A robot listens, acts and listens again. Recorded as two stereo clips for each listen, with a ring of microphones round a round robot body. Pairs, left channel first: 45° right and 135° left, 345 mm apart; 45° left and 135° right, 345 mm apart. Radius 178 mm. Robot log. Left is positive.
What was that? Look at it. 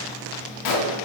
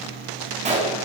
note: The gunshot: 65° right.
cmd yaw -65
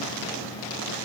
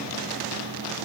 end: Facing where the gunshot came from. I can't hear it now.